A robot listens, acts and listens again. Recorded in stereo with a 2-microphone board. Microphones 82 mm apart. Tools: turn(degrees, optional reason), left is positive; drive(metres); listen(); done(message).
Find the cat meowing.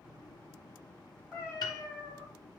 turn(degrees=-30)
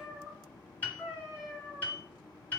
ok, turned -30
turn(degrees=-30)
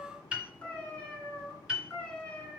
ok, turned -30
turn(degrees=20, reason="So it is at 20° left.")
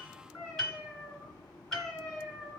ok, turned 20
done("Facing the cat meowing.")